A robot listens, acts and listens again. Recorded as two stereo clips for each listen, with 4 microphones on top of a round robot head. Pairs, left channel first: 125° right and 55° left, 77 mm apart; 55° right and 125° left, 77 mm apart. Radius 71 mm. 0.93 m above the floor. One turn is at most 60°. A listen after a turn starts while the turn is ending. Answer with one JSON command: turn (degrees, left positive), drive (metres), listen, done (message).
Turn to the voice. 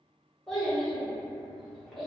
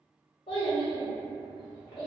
{"turn": -40}
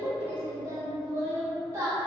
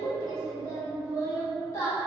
{"done": "Found it: a child speaking, straight ahead, under 1 m away."}